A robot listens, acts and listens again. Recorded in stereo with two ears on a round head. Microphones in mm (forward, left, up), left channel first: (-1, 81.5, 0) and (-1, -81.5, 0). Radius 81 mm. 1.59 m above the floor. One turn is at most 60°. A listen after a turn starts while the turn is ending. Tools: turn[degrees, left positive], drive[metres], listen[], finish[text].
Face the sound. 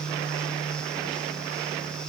Action: listen[]
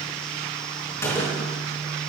Thought: The gunshot: about 15° left or 165° left.
Action: turn[15]
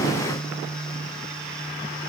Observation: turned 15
Action: listen[]
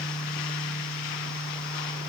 Action: finish[I heard a gunshot, but can't make it out now. It was about straight ahead or 150° left.]